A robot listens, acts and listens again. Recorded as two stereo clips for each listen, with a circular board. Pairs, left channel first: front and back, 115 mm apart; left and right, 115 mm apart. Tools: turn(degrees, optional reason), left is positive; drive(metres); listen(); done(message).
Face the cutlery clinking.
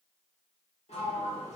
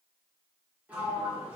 listen()
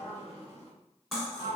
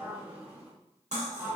turn(degrees=-90, reason="The cutlery clinking: 90° right.")
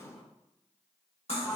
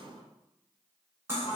turn(degrees=-20, reason="The cutlery clinking is now 20° right.")
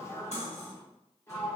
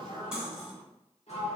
done("Found it: cutlery clinking, straight ahead.")